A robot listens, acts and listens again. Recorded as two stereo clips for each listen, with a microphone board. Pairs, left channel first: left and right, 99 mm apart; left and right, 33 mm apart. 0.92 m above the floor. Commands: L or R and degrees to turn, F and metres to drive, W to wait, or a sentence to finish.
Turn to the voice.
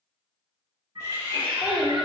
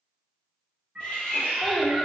R30
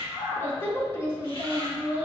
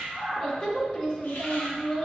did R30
L25
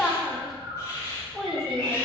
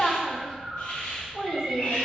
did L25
Found it: a child speaking, straight ahead, 1 to 2 m away.